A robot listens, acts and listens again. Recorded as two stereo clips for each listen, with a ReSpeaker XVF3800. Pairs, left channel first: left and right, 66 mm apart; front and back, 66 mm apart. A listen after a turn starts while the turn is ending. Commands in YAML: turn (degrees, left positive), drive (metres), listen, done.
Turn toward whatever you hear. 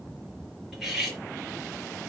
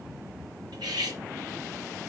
turn: -175
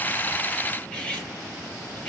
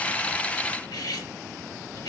turn: 15
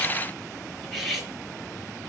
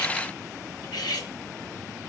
done: "Facing the cutlery clinking."